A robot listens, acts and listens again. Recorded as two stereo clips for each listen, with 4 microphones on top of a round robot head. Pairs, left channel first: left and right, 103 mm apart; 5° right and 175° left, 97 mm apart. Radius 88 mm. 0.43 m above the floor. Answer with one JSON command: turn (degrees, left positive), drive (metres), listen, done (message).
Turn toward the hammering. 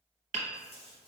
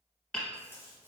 {"turn": -85}
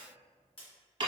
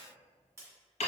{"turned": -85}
{"turn": -30}
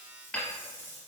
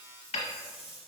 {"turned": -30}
{"turn": 10}
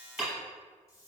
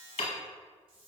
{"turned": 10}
{"done": "Facing the hammering."}